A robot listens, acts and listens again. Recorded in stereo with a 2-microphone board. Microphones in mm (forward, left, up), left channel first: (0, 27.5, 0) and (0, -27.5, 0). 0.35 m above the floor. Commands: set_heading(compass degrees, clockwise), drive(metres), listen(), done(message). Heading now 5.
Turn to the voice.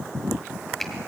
listen()
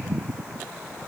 listen()
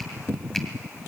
done("I can't make out anyone speaking to turn to.")